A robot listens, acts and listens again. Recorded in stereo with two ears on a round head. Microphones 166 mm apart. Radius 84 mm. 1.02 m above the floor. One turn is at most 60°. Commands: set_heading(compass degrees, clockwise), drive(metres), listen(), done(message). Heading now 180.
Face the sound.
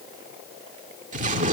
set_heading(225)
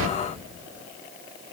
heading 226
set_heading(286)
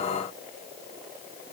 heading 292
set_heading(317)
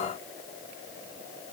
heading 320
done("I heard an explosion from this way, but can't make it out now.")